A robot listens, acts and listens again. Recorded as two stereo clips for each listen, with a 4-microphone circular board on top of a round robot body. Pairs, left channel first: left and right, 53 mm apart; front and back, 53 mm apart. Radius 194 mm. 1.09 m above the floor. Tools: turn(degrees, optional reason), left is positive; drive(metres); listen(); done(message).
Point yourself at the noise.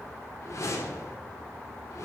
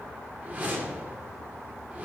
turn(degrees=120, reason="The whoosh: 120° left.")
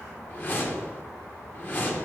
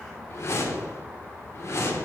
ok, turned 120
turn(degrees=35, reason="The whoosh is now 35° left.")
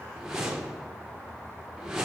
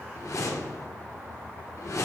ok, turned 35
turn(degrees=-10, reason="The whoosh is now 10° right.")
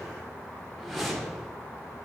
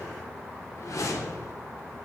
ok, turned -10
done("Found it: a whoosh, straight ahead.")